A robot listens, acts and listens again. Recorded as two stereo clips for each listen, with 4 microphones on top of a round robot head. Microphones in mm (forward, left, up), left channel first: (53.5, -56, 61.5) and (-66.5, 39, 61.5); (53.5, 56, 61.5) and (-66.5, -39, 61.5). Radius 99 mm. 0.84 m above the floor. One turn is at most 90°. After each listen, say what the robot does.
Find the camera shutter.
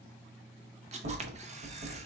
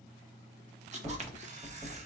Turn 90° left.
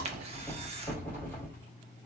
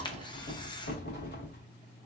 Turn 90° left.
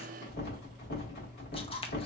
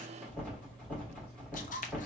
Turn 10° left.
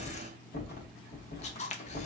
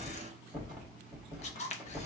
Found it: a camera shutter, straight ahead, under 1 m away.